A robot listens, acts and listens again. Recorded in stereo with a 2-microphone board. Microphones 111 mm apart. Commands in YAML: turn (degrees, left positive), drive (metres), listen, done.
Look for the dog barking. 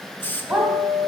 turn: -30
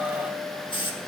listen: true
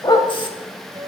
turn: 40
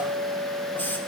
listen: true
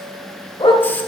turn: 50
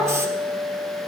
listen: true
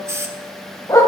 turn: 30
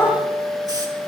turn: 20
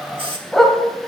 done: "Found it: a dog barking, straight ahead."